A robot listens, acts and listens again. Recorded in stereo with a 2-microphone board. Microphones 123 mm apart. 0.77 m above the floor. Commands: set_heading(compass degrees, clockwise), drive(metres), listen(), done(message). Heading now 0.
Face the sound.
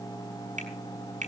set_heading(90)
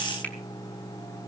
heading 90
listen()
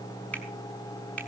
set_heading(80)
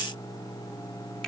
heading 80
listen()
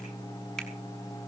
listen()
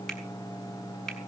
done("Facing the finger snap, over 4 m away.")